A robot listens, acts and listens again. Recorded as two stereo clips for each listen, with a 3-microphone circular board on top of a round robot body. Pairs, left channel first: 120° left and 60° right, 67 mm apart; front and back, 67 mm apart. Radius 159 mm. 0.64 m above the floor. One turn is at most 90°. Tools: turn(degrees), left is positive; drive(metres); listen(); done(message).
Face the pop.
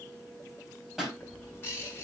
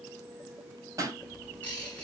turn(degrees=-90)
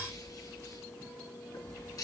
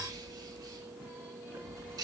turn(degrees=-55)
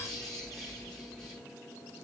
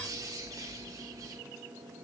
done("I heard a pop from this way, but can't make it out now.")